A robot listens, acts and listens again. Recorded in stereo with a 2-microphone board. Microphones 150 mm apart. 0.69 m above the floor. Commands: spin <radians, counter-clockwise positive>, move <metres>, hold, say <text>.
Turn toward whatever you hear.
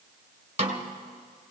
spin -0.87
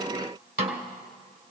spin -1.40
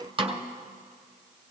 spin -0.61
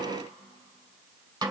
spin -0.44
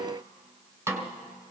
spin -0.26
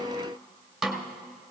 say Facing the snare drum.